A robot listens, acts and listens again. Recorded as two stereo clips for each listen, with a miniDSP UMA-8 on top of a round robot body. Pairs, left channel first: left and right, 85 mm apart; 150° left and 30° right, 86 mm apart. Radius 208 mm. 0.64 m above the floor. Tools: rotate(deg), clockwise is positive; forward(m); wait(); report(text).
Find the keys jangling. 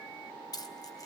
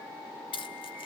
rotate(-140)
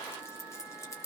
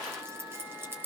rotate(-35)
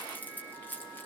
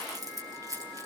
rotate(-20)
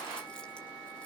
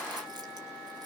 wait()
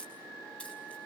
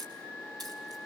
rotate(-15)
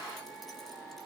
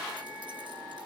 wait()
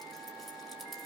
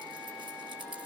wait()
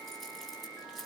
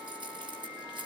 report("Facing where the keys jangling came from. I can't hear it now.")